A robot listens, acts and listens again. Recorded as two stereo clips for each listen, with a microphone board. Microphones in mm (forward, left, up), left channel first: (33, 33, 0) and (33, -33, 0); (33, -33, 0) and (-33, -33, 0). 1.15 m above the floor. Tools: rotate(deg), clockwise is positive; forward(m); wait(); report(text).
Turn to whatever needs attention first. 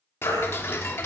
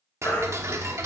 rotate(-70)
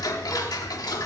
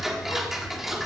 wait()
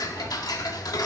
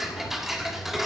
wait()
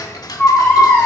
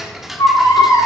rotate(-25)
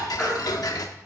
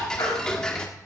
report("Facing the baby crying, over 4 m away.")